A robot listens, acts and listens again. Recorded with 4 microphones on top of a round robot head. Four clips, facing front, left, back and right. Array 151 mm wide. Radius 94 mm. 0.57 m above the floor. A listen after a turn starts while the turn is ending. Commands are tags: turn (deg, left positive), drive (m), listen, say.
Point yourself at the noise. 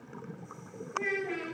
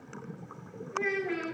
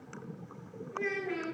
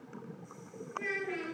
<turn deg="100"/>
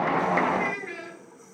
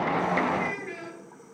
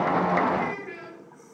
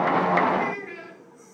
<say>Facing the child speaking, over 4 m away.</say>